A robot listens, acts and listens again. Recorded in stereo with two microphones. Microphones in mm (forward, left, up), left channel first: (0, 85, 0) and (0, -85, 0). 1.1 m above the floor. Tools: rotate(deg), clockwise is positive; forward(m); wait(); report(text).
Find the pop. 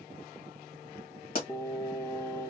rotate(-55)
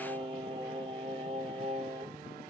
wait()
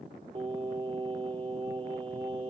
report("I heard a pop, but can't make it out now. It was about straight ahead or 70° left.")